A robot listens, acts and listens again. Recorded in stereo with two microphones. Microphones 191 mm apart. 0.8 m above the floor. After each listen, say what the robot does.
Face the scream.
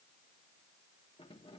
Keep listening.
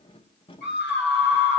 Turn 65° left.
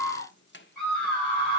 Found it: a scream, straight ahead.